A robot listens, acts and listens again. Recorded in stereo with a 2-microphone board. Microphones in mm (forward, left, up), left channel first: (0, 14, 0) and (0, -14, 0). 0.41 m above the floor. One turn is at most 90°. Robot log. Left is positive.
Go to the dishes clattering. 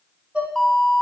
note: The dishes clattering: about 50° right or 130° right.
cmd yaw -50
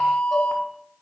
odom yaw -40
cmd idle
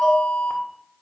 cmd idle
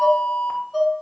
note: So it is at 10° right.
cmd yaw -10
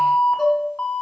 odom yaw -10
cmd fwd 1.0
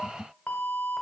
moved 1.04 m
cmd idle
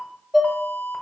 cmd fwd 1.0
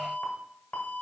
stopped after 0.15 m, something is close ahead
cmd idle
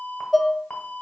end: Arrived at the dishes clattering, straight ahead.